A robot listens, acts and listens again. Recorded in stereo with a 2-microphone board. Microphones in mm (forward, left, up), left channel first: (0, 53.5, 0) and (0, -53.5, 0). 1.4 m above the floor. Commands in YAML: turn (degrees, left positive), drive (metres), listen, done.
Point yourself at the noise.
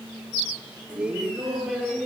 turn: -30
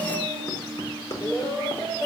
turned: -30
turn: 40
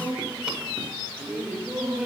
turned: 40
done: "Facing the laughter."